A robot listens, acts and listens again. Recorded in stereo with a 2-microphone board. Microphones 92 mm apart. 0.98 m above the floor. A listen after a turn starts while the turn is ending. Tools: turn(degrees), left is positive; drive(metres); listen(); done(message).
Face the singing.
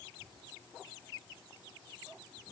listen()
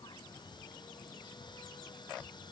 listen()
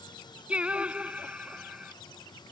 turn(degrees=-30)
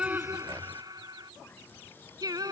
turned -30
turn(degrees=-135)
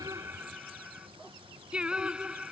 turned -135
turn(degrees=-10)
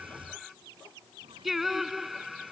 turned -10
done("Found it: singing, straight ahead.")